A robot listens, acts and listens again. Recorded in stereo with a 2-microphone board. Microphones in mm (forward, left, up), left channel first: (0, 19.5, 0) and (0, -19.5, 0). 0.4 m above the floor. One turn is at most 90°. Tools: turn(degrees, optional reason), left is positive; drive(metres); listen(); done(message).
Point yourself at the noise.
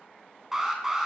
turn(degrees=-30)
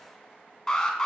turn(degrees=20, reason="So it is at 20° left.")
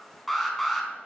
done("Found it: an alarm, straight ahead, 2 to 4 m away.")